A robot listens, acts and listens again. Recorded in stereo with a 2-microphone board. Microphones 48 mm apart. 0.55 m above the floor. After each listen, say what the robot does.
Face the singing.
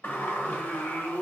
Turn 70° left.
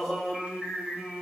Found it: singing, straight ahead, 1 to 2 m away.